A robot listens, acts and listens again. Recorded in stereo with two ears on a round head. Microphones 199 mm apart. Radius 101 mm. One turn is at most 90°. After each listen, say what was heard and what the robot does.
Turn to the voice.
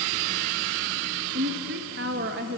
The woman speaking: about 45° right or 135° right. Turn 45° right.
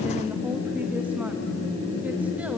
Keep listening.
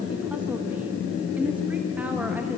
Keep listening.
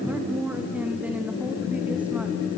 Facing the woman speaking.